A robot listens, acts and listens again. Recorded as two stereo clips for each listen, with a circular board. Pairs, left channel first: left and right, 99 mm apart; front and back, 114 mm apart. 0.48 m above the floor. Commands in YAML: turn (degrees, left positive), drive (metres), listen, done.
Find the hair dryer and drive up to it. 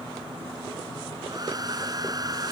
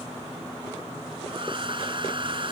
turn: -140
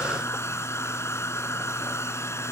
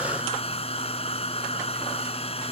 turn: 25
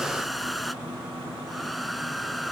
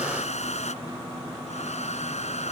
drive: 1.0
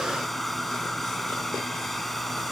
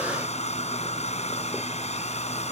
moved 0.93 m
drive: 1.0
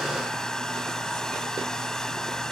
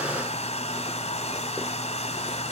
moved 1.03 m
drive: 1.0
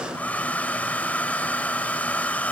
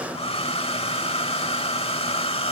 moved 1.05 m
turn: 15
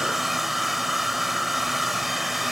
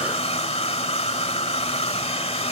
drive: 1.0
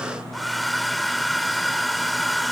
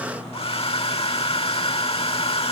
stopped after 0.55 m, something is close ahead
done: "I am next to the hair dryer."